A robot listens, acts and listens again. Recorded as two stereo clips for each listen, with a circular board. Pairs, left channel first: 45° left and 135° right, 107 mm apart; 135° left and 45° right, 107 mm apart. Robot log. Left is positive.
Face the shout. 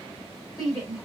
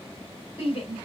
note: The shout: 100° left.
cmd yaw +100
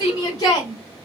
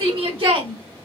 end: Facing the shout.